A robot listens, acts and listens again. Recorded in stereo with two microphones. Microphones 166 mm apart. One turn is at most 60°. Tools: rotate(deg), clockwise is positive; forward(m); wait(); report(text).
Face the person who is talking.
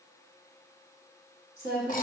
rotate(60)
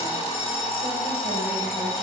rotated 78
wait()
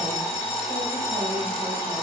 wait()
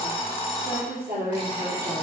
rotate(60)
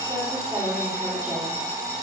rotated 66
report("Found it: a woman speaking, straight ahead.")